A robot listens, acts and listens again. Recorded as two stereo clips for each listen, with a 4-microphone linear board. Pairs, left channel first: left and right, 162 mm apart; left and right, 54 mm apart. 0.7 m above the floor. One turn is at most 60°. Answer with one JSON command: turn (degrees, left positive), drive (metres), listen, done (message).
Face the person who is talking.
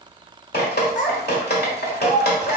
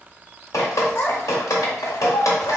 {"turn": 55}
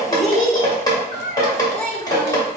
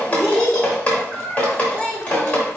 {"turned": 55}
{"done": "Found it: a child speaking, straight ahead."}